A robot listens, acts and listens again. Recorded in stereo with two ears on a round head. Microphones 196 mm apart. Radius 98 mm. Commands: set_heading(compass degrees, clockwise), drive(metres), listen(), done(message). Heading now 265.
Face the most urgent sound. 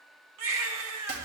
set_heading(330)
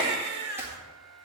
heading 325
set_heading(15)
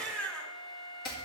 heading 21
done("Found it: a baby crying, straight ahead.")